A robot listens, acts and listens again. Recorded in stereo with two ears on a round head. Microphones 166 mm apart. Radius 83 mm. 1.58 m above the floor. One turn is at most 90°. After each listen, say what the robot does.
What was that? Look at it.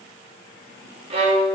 Turn 30° right.
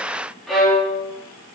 Found it: a violin, straight ahead, 2 to 4 m away.